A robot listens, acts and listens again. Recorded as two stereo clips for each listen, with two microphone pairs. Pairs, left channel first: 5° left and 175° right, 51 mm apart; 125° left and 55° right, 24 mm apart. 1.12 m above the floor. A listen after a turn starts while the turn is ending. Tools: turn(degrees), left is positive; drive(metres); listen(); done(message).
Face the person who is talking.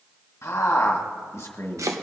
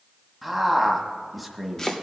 turn(degrees=30)
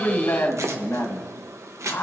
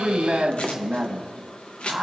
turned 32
done("Found it: a man speaking, straight ahead, 1 to 2 m away.")